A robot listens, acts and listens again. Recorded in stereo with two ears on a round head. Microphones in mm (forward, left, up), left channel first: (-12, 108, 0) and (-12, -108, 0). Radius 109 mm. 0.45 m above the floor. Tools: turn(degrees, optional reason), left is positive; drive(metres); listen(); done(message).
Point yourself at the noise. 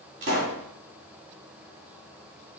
turn(degrees=-60, reason="The pop: about 60° right or 120° right.")
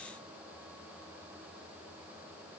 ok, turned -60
listen()
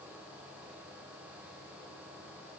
done("I heard a pop, but can't make it out now. It was about straight ahead or 60° right.")